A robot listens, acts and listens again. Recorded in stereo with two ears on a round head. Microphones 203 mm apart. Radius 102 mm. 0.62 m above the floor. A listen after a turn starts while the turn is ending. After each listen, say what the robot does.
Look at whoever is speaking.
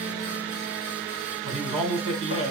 Turn 30° right.
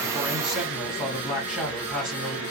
Facing the man speaking.